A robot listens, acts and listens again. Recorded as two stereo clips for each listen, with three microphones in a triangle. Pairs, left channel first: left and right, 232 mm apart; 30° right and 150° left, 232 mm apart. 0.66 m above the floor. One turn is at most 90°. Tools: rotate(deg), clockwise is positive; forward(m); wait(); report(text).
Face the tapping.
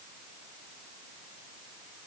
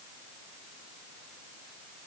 wait()
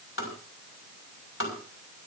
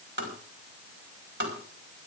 rotate(-90)
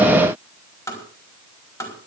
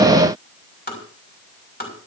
rotate(-15)
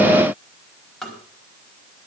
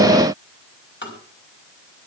report("Found it: tapping, straight ahead, over 4 m away.")